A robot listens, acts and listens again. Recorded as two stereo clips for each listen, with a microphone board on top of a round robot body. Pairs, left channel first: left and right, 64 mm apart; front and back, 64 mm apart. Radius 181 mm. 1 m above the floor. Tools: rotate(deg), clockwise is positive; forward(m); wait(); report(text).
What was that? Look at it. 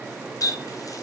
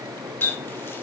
rotate(-55)
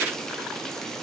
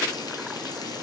wait()
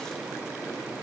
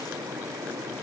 wait()
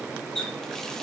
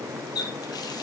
rotate(-10)
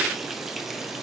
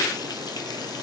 wait()
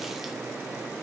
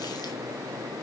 wait()
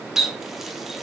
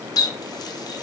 report("Facing the running tap.")